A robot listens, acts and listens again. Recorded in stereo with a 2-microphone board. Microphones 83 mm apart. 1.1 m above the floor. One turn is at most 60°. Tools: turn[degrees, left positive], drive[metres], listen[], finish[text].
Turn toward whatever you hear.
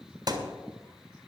Thought: The thud: about 50° right or 130° right.
Action: turn[-50]
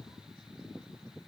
Action: listen[]
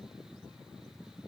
Action: finish[I heard a thud, but can't make it out now. It was about straight ahead or 80° right.]